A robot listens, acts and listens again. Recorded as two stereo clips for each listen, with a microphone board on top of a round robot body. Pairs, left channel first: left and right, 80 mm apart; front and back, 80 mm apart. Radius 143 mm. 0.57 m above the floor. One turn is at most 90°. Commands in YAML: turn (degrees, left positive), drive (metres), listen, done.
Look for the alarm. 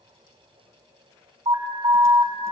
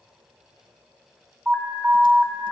turn: -90
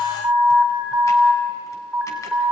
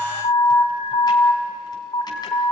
turn: -15
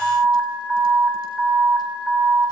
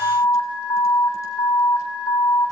done: "Facing the alarm, 2 to 4 m away."